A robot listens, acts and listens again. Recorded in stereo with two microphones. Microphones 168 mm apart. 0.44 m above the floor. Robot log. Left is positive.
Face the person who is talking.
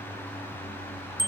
cmd idle
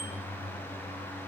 cmd idle
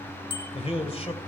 note: The man speaking: about 35° left or 145° left.
cmd yaw +35
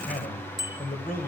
note: So it is at 100° left.
cmd yaw +100
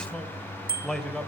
end: Found it: a man speaking, straight ahead, 2 to 4 m away.